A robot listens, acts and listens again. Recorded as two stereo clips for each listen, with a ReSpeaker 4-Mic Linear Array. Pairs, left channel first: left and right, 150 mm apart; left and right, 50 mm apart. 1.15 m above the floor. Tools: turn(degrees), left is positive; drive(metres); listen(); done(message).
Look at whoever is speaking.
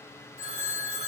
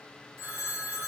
listen()
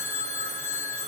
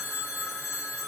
listen()
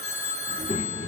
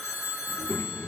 turn(degrees=50)
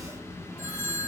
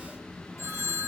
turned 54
done("Found it: a child speaking, straight ahead.")